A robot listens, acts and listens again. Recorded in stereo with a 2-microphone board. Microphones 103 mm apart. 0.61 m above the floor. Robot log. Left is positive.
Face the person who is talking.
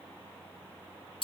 cmd idle
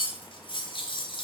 cmd idle
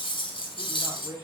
note: The man speaking: about 20° right or 160° right.
cmd yaw -20
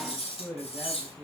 cmd yaw -30
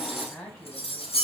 note: So it is at 20° left.
cmd yaw +20
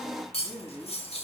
end: Facing the man speaking, over 4 m away.